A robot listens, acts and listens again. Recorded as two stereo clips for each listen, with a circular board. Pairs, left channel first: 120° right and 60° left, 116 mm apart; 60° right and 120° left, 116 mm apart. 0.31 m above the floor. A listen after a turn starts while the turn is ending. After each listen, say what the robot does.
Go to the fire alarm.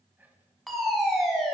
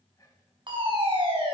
Turn 150° left.
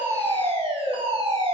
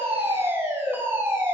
Turn 50° left.
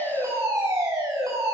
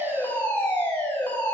Turn 10° left.
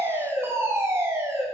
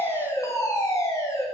Drive 1.0 m forward.
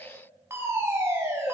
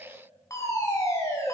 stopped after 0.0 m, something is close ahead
Something is in my way. I am facing the fire alarm but have not reached it.